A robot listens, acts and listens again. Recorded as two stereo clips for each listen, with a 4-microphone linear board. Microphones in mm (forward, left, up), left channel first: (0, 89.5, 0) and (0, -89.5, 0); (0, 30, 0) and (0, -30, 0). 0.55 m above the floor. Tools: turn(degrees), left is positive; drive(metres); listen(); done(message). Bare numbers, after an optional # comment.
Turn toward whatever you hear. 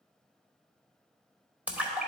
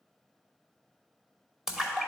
turn(-30)
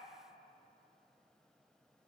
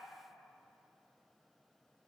listen()
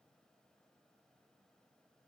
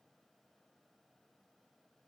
done("I heard a splash, but can't make it out now. It was about 20° left or 140° right.")